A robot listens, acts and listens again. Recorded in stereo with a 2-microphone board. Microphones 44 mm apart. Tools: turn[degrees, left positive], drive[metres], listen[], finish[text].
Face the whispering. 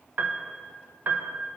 Action: listen[]
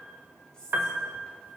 Thought: The whispering: about 20° left or 160° left.
Action: turn[20]
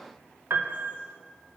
Action: listen[]
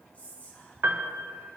Thought: So it is at 140° left.
Action: turn[140]
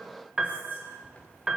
Thought: The whispering is now 35° left.
Action: turn[35]
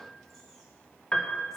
Action: listen[]
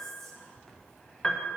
Action: finish[Facing the whispering.]